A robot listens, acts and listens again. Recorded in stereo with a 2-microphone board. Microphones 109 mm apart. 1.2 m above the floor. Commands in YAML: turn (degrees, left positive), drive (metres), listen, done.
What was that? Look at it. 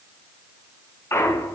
turn: 25
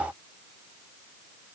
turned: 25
listen: true
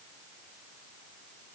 done: "I heard a clunk, but can't make it out now. It was about straight ahead or 130° left."